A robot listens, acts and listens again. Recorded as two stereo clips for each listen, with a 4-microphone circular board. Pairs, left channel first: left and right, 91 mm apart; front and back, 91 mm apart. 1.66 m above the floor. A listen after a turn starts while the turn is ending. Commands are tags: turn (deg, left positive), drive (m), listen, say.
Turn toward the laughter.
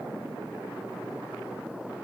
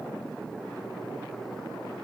<listen/>
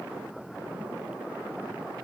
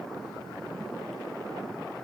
<listen/>
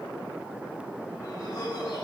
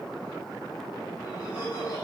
<turn deg="40"/>
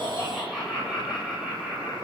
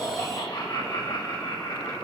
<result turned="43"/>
<say>Found it: laughter, straight ahead, over 4 m away.</say>